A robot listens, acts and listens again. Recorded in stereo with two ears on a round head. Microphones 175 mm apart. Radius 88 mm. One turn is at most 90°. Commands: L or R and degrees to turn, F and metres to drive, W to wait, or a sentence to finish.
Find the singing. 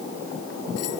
W
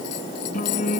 L40
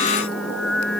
Found it: singing, straight ahead.